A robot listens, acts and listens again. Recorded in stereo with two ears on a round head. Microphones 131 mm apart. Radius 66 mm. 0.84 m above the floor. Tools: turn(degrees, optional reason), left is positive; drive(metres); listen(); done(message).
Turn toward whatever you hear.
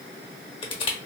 turn(degrees=35, reason="The crushing: about 35° left or 145° left.")
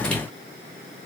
listen()
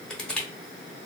done("Facing the crushing.")